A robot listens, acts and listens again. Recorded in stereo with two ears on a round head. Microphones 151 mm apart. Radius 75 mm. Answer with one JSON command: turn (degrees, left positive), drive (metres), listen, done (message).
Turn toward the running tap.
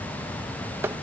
{"listen": true}
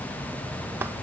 {"listen": true}
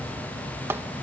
{"done": "I can't make out a running tap to turn to."}